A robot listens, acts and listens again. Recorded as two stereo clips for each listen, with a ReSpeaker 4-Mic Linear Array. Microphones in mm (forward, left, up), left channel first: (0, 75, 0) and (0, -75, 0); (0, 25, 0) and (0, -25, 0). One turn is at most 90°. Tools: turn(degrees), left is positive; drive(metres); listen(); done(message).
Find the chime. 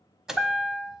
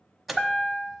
turn(degrees=-30)
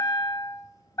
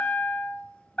turn(degrees=25)
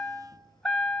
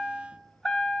done("Facing the chime, 1 to 2 m away.")